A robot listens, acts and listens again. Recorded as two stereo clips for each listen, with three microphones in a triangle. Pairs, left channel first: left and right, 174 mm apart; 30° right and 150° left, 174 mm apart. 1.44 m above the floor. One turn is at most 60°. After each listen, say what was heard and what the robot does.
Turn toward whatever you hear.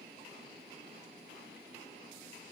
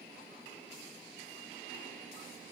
Keep listening.
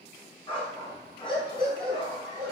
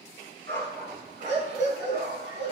The dog barking: 155° left. Turn 60° left.
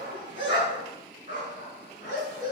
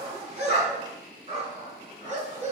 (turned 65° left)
The dog barking is now 100° left. Turn 60° left.
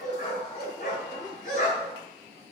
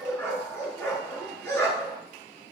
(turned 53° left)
The dog barking is now 45° left. Turn 45° left.
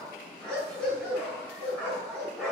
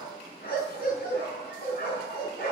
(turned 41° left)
Found it: a dog barking, straight ahead, over 4 m away.